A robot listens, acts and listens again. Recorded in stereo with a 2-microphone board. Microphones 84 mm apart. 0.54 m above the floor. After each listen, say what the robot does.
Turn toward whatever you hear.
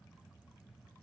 Keep listening.
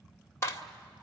Turn 30° left.
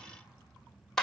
Facing the clap.